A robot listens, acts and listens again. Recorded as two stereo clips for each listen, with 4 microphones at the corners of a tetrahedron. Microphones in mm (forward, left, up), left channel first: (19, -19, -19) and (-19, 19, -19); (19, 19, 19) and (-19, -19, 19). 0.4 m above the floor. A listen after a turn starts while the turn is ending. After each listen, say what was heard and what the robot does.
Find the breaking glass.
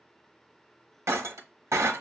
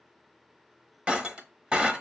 The breaking glass: 155° left. Turn 155° left.
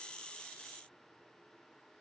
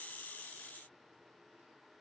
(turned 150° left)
I heard breaking glass from this way, but can't make it out now.